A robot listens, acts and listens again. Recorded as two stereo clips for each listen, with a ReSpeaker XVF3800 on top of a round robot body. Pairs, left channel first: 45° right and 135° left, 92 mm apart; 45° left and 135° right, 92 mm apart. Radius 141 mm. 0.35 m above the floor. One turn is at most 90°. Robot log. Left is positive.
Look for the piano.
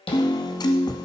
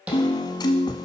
end: Found it: a piano, straight ahead.